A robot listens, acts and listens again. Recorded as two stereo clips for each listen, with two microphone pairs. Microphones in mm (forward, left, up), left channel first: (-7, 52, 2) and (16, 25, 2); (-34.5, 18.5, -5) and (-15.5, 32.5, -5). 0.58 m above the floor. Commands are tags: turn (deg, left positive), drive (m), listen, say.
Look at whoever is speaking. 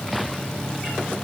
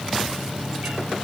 <listen/>
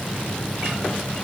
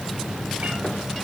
<listen/>
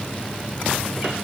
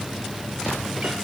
<say>I can't make out anyone speaking.</say>